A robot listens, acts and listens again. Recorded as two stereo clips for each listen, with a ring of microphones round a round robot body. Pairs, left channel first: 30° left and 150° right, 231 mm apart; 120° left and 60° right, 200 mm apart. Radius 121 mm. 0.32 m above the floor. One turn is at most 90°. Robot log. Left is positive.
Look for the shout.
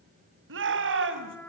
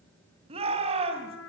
note: The shout: 120° right.
cmd yaw -90
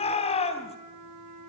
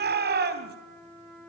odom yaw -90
note: The shout is now 30° right.
cmd yaw -30
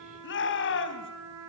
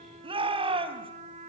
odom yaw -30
end: Facing the shout.